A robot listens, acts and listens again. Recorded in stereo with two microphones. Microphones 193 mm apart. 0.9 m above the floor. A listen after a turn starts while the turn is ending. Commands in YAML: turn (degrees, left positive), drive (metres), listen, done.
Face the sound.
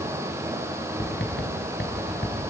turn: 70
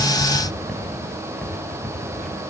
done: "Found it: writing, straight ahead."